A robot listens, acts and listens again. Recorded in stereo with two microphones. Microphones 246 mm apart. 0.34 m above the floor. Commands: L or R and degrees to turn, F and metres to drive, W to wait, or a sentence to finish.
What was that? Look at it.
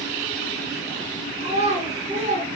R30
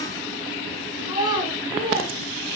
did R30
R20
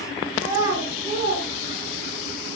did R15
R20
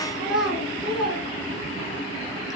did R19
Facing the child speaking.